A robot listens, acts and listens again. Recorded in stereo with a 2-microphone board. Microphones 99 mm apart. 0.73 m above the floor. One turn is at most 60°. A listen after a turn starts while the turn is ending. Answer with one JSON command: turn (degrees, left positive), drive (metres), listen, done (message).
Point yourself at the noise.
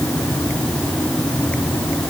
{"listen": true}
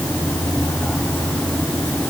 {"listen": true}
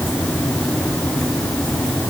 {"done": "I can't make out anything to turn to."}